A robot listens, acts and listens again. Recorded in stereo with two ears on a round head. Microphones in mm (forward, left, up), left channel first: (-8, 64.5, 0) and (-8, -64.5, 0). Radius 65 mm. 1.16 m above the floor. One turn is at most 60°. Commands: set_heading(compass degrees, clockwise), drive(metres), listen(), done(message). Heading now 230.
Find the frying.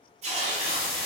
set_heading(210)
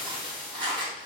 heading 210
done("Facing the frying.")